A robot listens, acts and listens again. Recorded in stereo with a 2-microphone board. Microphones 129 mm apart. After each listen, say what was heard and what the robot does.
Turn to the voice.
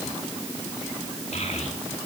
The child speaking: about 60° left or 120° left. Turn 60° left.
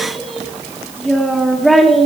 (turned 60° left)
Facing the child speaking, 2 to 4 m away.